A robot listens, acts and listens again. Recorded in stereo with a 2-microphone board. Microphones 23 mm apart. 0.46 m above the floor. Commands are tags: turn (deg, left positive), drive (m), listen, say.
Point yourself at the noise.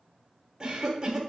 <turn deg="-20"/>
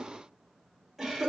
<say>Found it: a cough, straight ahead, 1 to 2 m away.</say>